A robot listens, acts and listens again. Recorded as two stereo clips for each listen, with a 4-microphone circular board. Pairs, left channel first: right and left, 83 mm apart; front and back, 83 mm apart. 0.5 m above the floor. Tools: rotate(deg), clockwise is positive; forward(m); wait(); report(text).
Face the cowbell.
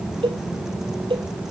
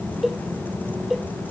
rotate(-90)
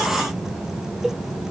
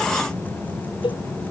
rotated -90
report("Facing the cowbell.")